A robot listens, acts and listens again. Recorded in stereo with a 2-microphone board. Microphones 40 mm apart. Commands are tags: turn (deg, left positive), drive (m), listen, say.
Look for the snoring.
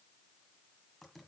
<listen/>
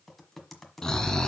<turn deg="15"/>
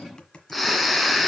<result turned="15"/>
<say>Facing the snoring, 1 to 2 m away.</say>